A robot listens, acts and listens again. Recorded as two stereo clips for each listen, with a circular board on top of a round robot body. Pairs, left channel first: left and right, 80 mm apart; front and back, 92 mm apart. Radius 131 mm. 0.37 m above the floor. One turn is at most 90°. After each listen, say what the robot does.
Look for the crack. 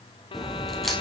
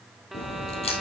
Facing the crack.